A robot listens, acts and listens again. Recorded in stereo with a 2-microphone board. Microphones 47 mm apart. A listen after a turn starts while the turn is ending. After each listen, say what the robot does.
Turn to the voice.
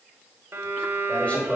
Turn 30° left.
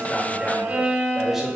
Turn 10° right.
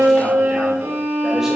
Keep listening.
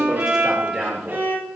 Turn 20° right.
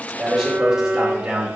Turn 15° right.
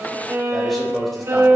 Found it: a man speaking, straight ahead, 2 to 4 m away.